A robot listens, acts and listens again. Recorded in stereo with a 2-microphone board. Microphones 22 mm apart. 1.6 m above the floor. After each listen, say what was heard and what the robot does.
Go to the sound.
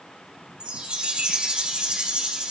The chime: about 50° right or 130° right. Turn 50° right.
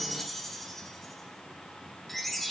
Drive 1.0 m forward.
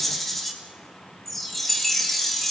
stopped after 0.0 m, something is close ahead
Blocked. The chime is further on, straight ahead.